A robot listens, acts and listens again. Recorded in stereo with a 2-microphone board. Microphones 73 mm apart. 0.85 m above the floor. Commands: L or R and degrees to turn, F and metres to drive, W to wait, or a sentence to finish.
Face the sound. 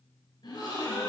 L90
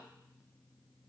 I heard a gasp from this way, but can't make it out now.